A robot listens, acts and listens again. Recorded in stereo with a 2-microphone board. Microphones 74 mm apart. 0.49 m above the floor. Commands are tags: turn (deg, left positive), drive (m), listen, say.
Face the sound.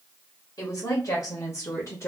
<turn deg="40"/>
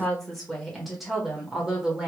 <turn deg="-15"/>
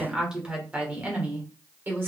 <turn deg="-30"/>
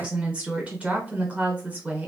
<turn deg="-20"/>
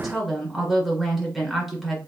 <say>Facing the woman speaking.</say>